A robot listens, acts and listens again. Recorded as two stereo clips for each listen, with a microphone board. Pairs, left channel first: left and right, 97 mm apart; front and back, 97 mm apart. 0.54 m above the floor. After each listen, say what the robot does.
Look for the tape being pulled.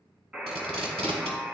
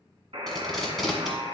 Turn 85° right.
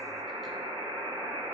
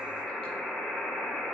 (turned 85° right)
Keep listening.
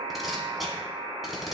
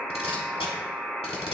Facing the tape being pulled.